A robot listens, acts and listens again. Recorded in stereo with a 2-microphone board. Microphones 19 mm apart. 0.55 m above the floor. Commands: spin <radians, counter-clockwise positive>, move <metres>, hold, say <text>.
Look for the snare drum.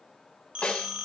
spin 0.96
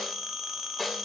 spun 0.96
spin 0.17
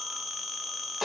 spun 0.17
say Found it: a snare drum, straight ahead, 2 to 4 m away.